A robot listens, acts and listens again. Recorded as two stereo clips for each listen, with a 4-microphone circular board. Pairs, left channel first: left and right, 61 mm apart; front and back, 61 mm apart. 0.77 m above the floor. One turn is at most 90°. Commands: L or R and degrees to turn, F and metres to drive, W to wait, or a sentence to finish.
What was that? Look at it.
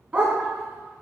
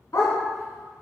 R20
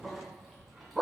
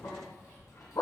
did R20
Facing the dog barking, 1 to 2 m away.